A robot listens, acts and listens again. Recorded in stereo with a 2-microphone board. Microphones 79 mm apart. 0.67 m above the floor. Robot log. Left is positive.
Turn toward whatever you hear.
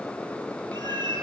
note: The cat meowing: about 70° right or 110° right.
cmd yaw -70
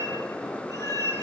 note: So it is at 50° right.
cmd yaw -50
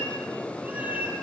note: The cat meowing is now 20° right.
cmd yaw -20
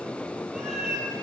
end: Facing the cat meowing.